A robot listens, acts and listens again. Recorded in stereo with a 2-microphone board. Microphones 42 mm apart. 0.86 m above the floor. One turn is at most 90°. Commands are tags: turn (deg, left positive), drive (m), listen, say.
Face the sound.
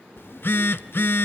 <turn deg="60"/>
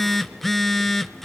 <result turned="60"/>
<say>Found it: a phone buzzing, straight ahead.</say>